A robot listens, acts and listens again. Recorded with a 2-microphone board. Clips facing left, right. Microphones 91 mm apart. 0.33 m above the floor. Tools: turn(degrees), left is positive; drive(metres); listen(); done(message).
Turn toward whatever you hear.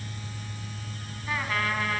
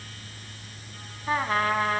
turn(degrees=-35)
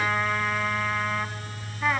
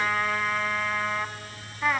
done("Found it: a trumpet, straight ahead.")